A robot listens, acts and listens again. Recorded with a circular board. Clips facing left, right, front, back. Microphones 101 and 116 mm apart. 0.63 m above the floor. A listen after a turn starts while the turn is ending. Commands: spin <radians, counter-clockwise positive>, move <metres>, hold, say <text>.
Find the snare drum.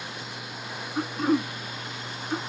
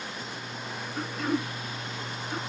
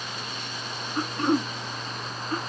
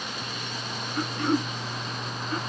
hold
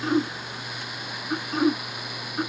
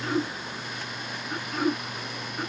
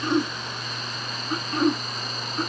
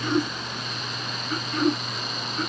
hold
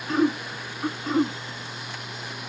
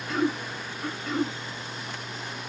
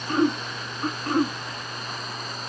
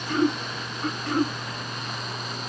say I can't make out a snare drum, only throat clearing.